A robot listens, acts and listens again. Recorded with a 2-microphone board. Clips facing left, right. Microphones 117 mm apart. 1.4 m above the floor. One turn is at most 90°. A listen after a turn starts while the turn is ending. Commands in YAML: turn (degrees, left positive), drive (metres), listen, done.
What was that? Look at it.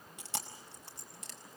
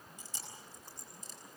turn: 90
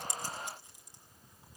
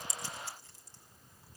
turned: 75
turn: 15
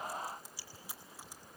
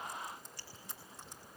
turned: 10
done: "Found it: chewing, straight ahead, over 4 m away."